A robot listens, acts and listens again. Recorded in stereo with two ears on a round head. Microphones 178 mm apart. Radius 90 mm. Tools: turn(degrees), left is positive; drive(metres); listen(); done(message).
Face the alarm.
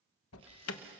turn(degrees=75)
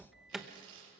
done("Found it: an alarm, straight ahead, 1 to 2 m away.")